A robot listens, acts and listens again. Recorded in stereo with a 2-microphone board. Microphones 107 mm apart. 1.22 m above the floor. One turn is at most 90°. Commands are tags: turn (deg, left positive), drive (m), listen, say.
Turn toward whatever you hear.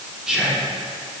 <turn deg="-30"/>
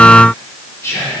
<turn deg="25"/>
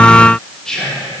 <say>Facing the whispering.</say>